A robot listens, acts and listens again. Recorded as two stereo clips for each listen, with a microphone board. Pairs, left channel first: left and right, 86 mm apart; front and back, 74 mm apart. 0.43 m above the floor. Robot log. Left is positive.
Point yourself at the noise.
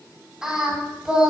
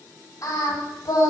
note: The singing: 10° right.
cmd yaw -10
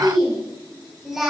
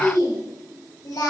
end: Facing the singing.